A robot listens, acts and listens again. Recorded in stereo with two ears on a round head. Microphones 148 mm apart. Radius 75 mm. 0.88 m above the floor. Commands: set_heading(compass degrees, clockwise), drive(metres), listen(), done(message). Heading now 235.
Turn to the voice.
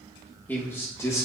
set_heading(215)
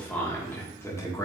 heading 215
set_heading(195)
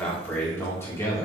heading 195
set_heading(175)
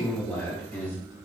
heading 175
set_heading(145)
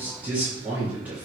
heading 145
set_heading(155)
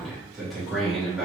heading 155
done("Facing the man speaking.")